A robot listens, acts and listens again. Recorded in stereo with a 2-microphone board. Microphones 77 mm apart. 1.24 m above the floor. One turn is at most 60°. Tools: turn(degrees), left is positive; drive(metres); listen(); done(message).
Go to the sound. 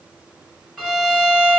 turn(degrees=30)
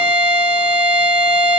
turn(degrees=-20)
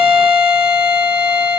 drive(metres=1.0)
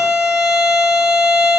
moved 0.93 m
turn(degrees=-10)
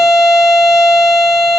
drive(metres=1.0)
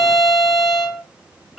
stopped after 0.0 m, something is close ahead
done("Arrived at the violin, straight ahead.")